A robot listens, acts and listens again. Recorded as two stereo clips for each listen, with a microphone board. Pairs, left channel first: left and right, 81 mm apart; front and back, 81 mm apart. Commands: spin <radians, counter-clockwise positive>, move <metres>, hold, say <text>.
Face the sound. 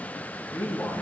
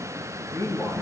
spin 0.61
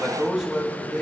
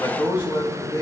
say Found it: a man speaking, straight ahead.